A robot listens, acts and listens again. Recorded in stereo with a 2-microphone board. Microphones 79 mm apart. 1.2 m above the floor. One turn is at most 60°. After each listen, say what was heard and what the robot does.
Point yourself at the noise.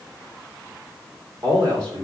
Turn 60° right.
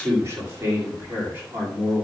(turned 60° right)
So it is at 25° right. Turn 25° right.
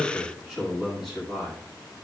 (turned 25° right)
Found it: a man speaking, straight ahead, 1 to 2 m away.